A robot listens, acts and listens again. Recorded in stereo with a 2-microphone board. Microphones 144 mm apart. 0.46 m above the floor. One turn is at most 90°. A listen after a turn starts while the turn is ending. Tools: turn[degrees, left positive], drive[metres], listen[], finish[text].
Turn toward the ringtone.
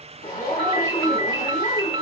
Thought: The ringtone: about 35° right or 145° right.
Action: turn[-35]
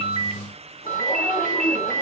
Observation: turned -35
Thought: So it is at 110° right.
Action: turn[-90]
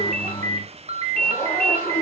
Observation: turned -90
Thought: The ringtone is now 55° right.
Action: turn[-55]
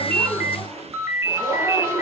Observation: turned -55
Thought: The ringtone is now 20° right.
Action: turn[-20]
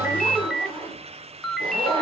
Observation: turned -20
Action: finish[Found it: a ringtone, straight ahead.]